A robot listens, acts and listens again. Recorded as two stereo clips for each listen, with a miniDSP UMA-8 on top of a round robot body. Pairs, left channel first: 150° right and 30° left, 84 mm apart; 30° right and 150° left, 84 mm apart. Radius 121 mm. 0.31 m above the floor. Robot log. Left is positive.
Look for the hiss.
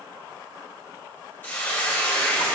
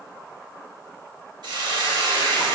note: The hiss: 145° left.
cmd yaw +145
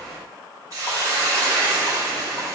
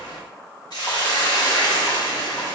note: The hiss is now 10° right.
cmd yaw -10
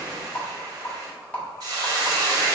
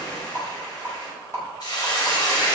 end: Found it: a hiss, straight ahead.